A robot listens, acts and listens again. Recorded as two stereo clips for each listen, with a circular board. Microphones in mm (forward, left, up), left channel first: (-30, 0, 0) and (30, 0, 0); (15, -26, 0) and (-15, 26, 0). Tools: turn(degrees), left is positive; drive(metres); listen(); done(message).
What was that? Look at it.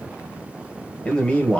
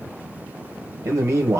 turn(degrees=110)
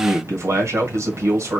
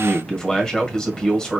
turn(degrees=20)
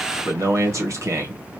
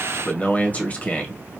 done("Facing the man speaking, 1 to 2 m away.")